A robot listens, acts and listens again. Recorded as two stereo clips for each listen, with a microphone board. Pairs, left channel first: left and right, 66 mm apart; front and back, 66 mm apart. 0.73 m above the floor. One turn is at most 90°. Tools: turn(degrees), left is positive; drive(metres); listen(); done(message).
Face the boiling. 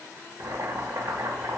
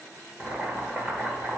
turn(degrees=-90)
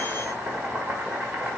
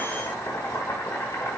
turn(degrees=-30)
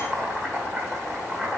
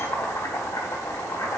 turn(degrees=-15)
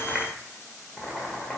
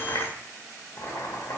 done("Facing the boiling, 1 to 2 m away.")